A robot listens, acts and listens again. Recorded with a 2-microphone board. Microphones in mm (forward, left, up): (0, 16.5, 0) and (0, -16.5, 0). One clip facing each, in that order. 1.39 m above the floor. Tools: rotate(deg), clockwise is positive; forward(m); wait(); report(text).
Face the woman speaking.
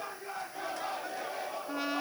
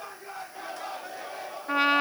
wait()
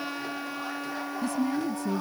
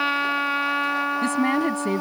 rotate(60)
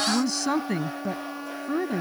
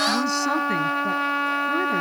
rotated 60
report("Found it: a woman speaking, straight ahead.")